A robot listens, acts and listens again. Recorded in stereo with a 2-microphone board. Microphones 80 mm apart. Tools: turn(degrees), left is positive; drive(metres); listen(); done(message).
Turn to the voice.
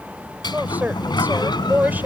turn(degrees=-20)
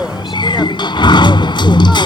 listen()
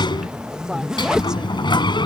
listen()
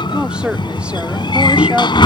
turn(degrees=-15)
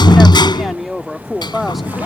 turn(degrees=30)
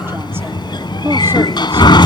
listen()
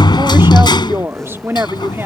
turn(degrees=-30)
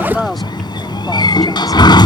done("Facing the woman speaking.")